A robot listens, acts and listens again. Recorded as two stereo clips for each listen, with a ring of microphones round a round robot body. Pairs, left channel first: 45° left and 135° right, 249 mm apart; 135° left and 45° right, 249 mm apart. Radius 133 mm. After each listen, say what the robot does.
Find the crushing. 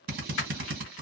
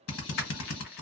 Turn 85° left.
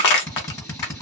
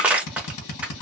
Turn 40° left.
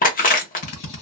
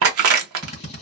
Turn 15° right.
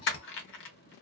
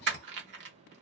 Found it: crushing, straight ahead.